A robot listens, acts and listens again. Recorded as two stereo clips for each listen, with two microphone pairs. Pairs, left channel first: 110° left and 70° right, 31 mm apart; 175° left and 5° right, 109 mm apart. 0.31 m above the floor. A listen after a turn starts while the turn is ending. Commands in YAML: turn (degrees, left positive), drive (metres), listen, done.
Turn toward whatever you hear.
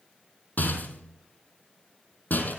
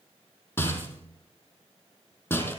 turn: 105
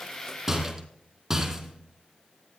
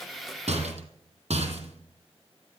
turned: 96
turn: 10
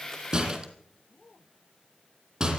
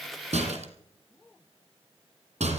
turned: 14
done: "Found it: a rattle, straight ahead."